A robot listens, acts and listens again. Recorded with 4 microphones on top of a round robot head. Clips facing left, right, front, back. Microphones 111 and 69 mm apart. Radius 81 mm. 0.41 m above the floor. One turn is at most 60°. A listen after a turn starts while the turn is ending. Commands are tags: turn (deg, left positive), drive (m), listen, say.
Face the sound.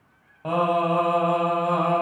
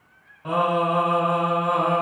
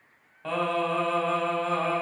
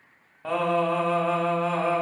<turn deg="60"/>
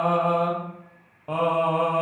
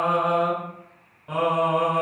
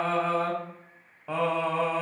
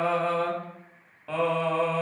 <turn deg="60"/>
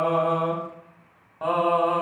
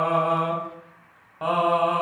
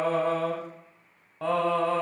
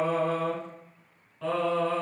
<say>Facing the singing, 1 to 2 m away.</say>